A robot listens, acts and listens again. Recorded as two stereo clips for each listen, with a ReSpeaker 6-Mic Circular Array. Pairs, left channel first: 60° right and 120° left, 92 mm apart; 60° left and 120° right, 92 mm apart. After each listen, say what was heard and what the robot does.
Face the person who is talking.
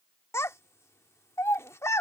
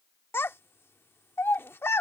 Found it: a child speaking, straight ahead.